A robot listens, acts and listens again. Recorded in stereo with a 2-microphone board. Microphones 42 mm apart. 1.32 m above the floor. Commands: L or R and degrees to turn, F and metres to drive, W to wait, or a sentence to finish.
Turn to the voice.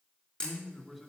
L30
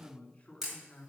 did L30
L145
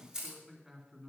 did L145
R10
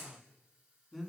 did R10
Facing the man speaking, 2 to 4 m away.